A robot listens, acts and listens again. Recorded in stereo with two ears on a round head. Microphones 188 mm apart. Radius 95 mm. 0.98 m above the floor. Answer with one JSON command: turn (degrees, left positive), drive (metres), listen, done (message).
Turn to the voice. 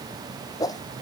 {"listen": true}
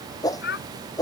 {"turn": 50}
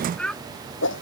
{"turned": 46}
{"done": "Found it: a child speaking, straight ahead."}